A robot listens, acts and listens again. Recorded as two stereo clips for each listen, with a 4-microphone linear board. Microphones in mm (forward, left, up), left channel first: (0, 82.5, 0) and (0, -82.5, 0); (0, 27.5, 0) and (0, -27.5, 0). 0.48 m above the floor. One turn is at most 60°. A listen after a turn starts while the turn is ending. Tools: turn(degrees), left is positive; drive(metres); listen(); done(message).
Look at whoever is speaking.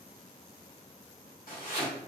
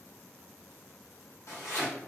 listen()
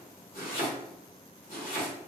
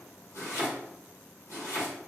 listen()
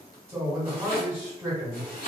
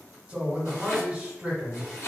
turn(degrees=-15)
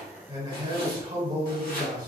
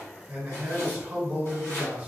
turn(degrees=-60)
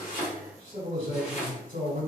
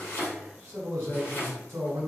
turn(degrees=-60)
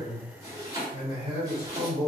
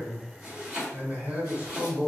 turn(degrees=-40)
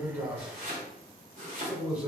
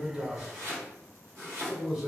turn(degrees=-10)
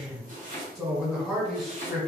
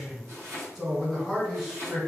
done("Facing the man speaking, 1 to 2 m away.")